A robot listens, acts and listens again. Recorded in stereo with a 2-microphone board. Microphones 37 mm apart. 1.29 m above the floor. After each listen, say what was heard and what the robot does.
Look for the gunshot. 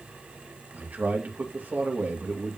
Keep listening.
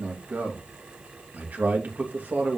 Keep listening.
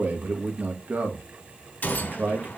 The gunshot: about 55° left or 125° left. Turn 55° left.
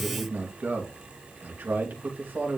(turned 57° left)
Keep listening.
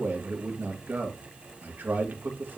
I heard a gunshot, but can't make it out now. It was about straight ahead or 70° left.